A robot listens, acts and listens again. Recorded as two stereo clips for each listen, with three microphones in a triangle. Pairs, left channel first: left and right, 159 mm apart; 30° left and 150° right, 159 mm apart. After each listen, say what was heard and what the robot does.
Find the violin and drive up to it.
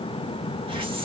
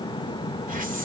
Keep listening.
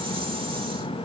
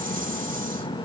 Keep listening.
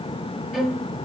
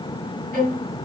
The violin: straight behind. Turn 180° left.
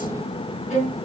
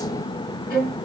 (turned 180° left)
The violin is now 50° left. Turn 50° left.
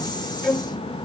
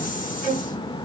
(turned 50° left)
Drive 1.0 m forward.
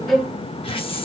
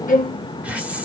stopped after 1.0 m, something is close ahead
I am next to the violin.